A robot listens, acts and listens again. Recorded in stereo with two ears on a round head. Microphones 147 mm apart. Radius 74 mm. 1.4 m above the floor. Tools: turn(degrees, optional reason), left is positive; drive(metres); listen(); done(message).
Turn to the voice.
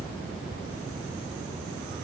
listen()
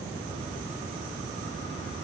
listen()
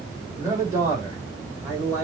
turn(degrees=-20, reason="The man speaking: about 20° right or 160° right.")
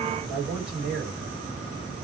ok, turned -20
turn(degrees=-35, reason="The man speaking: about 35° right or 145° right.")
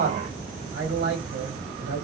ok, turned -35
turn(degrees=-105, reason="So it is at 105° right.")
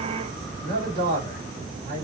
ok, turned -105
turn(degrees=-25, reason="The man speaking is now 25° right.")
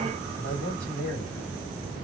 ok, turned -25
turn(degrees=10, reason="The man speaking is now 10° left.")
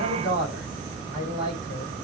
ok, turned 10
done("Facing the man speaking.")